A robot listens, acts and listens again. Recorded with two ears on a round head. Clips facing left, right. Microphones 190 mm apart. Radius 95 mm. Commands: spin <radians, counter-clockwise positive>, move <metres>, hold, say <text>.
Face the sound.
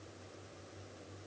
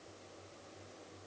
hold
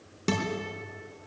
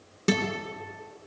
spin -0.52
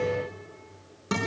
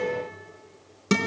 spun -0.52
spin -2.44
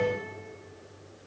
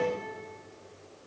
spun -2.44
hold
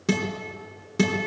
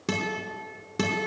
say Found it: a guitar, straight ahead.